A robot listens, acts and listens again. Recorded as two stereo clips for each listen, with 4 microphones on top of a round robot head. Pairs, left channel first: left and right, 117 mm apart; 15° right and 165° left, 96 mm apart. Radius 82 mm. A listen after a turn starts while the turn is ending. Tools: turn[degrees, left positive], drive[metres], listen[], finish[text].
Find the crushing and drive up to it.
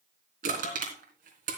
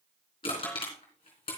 Thought: The crushing: 65° right.
Action: turn[-65]
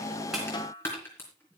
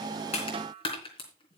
Thought: The crushing is now 15° left.
Action: turn[15]
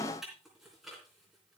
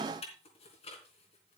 Action: drive[1.0]
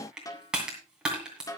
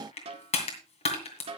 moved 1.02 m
Action: drive[1.0]
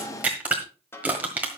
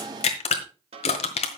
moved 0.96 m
Thought: The crushing is now 10° right.
Action: turn[-10]
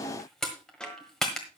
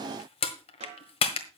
Action: drive[1.0]
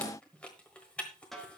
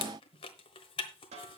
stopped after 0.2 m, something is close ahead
Thought: The crushing is now 10° left.
Action: turn[10]
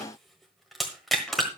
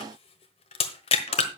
Action: finish[Arrived at the crushing, straight ahead.]